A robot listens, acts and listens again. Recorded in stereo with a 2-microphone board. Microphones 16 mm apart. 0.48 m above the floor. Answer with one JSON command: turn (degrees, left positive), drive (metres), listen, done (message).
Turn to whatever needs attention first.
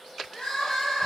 {"turn": 60}
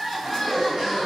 {"turn": 15}
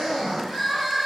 {"done": "Facing the crying, 1 to 2 m away."}